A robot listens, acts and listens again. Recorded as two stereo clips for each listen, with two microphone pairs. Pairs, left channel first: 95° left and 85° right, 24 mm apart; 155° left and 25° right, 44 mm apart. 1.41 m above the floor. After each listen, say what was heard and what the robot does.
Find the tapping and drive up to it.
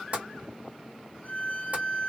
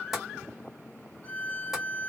The tapping: 105° right. Turn 105° right.
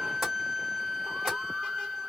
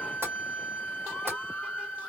Drive 1.0 m forward.
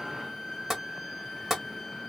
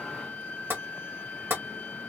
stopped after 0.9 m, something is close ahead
I am next to the tapping.